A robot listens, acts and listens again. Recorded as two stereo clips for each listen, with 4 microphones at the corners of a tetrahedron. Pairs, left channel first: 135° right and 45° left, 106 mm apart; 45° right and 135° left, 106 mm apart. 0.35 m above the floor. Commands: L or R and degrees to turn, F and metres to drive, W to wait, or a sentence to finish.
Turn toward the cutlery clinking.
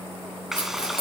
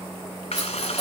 R95
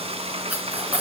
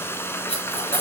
R30
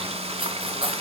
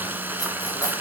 L10
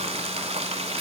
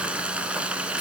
W
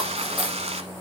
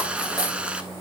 Found it: cutlery clinking, straight ahead.